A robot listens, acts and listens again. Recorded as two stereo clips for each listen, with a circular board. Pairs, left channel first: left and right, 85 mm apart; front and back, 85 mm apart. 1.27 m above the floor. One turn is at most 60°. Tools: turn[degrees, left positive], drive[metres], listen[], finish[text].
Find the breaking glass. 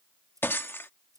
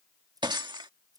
Thought: The breaking glass: 155° left.
Action: turn[60]
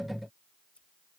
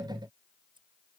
Thought: Nothing new. It was at 95° left.
Action: turn[60]
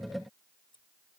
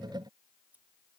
Thought: Nothing new. It was at 35° left.
Action: turn[35]
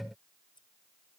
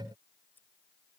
Action: finish[I heard breaking glass from this way, but can't make it out now.]